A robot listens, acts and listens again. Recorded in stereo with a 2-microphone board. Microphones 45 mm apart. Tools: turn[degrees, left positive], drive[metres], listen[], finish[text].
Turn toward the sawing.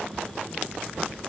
Action: listen[]
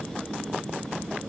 Action: listen[]
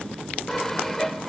Action: turn[30]
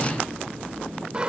Thought: So it is at 25° right.
Action: turn[-25]
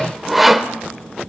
Action: finish[Facing the sawing.]